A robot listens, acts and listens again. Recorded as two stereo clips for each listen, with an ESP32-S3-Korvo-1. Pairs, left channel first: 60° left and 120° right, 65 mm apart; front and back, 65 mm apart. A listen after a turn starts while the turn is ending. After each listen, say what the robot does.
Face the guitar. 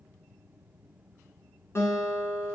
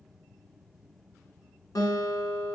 Turn 15° left.
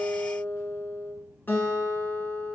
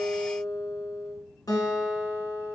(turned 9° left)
Facing the guitar.